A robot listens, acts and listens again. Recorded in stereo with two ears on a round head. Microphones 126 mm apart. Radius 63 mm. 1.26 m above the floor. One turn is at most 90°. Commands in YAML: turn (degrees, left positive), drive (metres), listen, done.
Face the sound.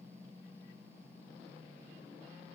listen: true
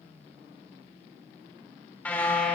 turn: 30
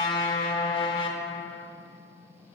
turn: 90
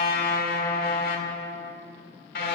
turn: 75
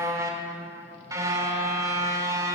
turn: -25
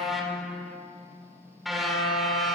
done: "Found it: a car horn, straight ahead, 2 to 4 m away."